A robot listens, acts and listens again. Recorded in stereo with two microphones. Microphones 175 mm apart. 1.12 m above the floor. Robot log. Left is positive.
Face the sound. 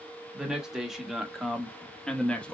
cmd yaw +30
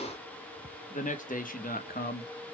note: So it is at 115° left.
cmd yaw +115
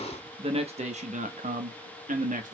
note: The man speaking is now 50° right.
cmd yaw -50
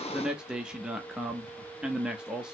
end: Found it: a man speaking, straight ahead, 1 to 2 m away.